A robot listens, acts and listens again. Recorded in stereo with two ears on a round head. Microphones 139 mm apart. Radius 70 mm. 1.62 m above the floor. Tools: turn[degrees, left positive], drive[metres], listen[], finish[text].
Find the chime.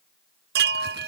Thought: The chime: about 75° right or 105° right.
Action: turn[-75]
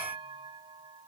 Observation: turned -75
Thought: So it is at 30° right.
Action: turn[-30]
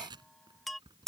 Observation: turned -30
Action: finish[Found it: a chime, straight ahead.]